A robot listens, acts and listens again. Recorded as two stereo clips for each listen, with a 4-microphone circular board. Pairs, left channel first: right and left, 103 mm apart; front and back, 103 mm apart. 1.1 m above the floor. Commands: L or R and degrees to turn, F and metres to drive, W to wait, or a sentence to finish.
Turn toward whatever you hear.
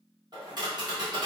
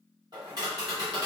L135
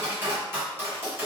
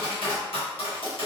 L25
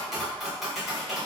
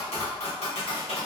Facing the tapping.